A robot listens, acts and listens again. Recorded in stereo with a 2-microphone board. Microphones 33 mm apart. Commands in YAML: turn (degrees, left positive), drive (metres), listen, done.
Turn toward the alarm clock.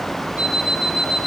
turn: -90
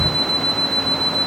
turn: 15
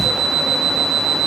done: "Found it: an alarm clock, straight ahead."